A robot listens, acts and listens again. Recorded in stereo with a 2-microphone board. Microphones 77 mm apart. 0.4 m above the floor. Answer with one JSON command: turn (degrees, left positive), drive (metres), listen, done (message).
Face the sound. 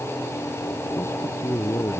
{"turn": 35}
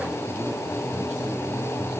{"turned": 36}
{"listen": true}
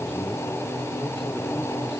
{"listen": true}
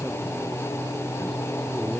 {"done": "I heard a man speaking, but can't make it out now. It was about straight ahead or 110° left."}